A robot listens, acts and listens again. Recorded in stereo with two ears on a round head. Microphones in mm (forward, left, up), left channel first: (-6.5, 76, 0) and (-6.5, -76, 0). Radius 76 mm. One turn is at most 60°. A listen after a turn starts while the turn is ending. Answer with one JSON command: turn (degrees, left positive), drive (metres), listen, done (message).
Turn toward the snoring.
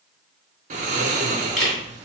{"turn": -45}
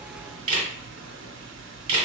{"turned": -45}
{"turn": -60}
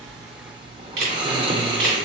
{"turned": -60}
{"turn": -25}
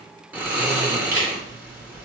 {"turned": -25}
{"turn": -10}
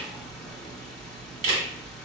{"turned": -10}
{"done": "Facing the snoring, under 1 m away."}